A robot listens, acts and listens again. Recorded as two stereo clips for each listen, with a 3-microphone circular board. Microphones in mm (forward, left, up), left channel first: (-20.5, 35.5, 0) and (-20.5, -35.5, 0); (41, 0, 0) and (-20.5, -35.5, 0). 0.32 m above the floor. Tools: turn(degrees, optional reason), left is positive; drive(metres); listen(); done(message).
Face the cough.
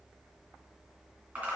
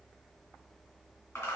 listen()
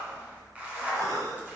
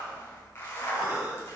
turn(degrees=-85, reason="The cough: 85° right.")
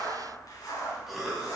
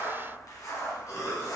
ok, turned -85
done("Facing the cough, 1 to 2 m away.")